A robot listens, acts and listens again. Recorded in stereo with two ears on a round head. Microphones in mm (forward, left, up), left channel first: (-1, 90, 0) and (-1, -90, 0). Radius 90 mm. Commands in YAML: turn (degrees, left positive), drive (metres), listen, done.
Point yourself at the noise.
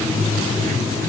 listen: true
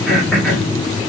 turn: 30
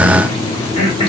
turn: 145
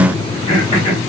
turn: 35
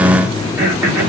turn: -15
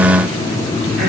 listen: true
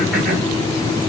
listen: true
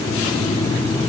done: "Facing where the throat clearing came from. I can't hear it now."